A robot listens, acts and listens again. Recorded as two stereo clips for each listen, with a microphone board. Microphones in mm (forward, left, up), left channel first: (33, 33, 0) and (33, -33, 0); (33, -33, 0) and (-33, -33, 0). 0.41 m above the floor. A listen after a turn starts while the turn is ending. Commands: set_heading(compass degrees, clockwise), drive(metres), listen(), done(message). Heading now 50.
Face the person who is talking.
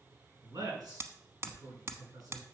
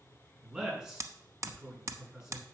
set_heading(150)
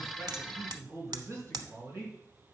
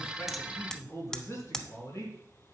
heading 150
set_heading(195)
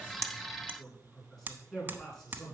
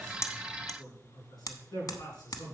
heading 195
set_heading(185)
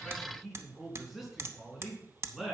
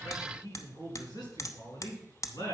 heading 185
done("Found it: a man speaking, straight ahead, over 4 m away.")